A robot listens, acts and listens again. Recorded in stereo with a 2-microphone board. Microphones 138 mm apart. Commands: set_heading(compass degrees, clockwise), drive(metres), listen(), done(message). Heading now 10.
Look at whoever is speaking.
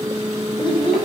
set_heading(335)
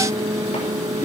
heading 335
listen()
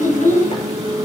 set_heading(225)
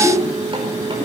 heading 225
set_heading(210)
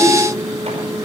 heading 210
listen()
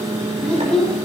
done("Found it: a child speaking, straight ahead, over 4 m away.")